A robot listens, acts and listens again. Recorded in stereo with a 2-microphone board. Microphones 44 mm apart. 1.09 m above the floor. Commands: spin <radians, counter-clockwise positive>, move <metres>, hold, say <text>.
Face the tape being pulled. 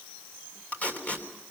spin 0.61
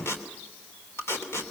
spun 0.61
spin 1.92
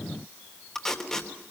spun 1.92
spin 0.17
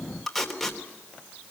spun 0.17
say Found it: tape being pulled, straight ahead.